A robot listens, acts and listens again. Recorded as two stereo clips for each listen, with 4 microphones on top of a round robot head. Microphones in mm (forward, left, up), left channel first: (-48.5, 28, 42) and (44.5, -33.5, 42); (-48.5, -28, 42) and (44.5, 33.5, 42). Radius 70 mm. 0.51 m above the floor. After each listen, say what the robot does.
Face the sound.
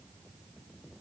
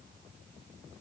Keep listening.
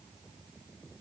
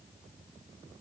Keep listening.
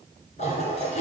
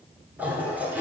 Turn 110° left.
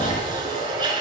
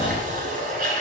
Turn 20° left.
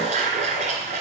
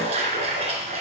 Facing the toilet flushing, 2 to 4 m away.